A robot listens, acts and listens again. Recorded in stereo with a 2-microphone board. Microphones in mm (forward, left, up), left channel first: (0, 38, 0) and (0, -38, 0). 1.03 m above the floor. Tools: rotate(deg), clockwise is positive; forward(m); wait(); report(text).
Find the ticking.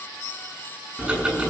rotate(30)
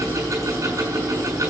rotate(135)
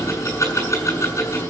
rotate(-40)
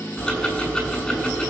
rotate(-10)
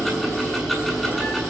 report("Found it: ticking, straight ahead, over 4 m away.")